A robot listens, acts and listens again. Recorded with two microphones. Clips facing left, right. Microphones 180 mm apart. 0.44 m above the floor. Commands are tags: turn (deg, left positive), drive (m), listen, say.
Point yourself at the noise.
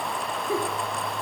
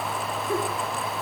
<turn deg="20"/>
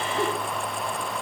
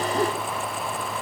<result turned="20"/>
<say>Found it: a giggle, straight ahead.</say>